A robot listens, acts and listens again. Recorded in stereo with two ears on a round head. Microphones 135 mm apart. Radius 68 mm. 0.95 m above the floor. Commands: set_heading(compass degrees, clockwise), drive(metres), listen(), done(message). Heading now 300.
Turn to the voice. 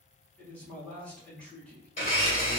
set_heading(270)
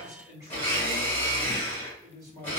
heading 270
set_heading(290)
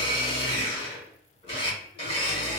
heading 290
listen()
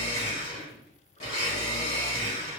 listen()
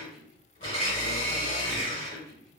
done("Found it: a man speaking, straight ahead, 1 to 2 m away.")